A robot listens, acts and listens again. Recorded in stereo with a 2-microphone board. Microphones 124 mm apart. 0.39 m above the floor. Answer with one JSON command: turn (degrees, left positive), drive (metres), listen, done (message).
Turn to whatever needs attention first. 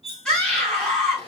{"turn": 30}
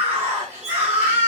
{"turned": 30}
{"turn": -25}
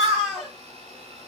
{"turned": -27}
{"done": "Found it: a scream, straight ahead, 2 to 4 m away."}